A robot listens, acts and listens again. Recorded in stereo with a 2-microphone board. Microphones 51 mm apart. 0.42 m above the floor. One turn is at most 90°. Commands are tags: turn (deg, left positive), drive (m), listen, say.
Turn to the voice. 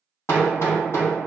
<listen/>
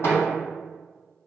<listen/>
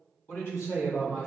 <turn deg="55"/>
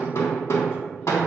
<listen/>
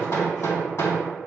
<listen/>
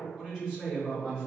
<say>Found it: a woman speaking, straight ahead, 2 to 4 m away.</say>